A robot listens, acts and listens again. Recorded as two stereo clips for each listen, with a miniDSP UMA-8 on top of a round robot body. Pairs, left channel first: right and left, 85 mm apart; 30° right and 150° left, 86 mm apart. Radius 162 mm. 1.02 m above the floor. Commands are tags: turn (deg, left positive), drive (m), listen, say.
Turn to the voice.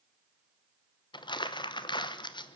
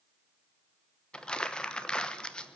<listen/>
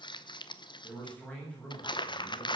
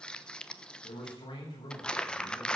<turn deg="-15"/>
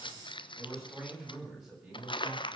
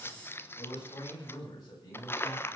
<say>Found it: a man speaking, straight ahead, over 4 m away.</say>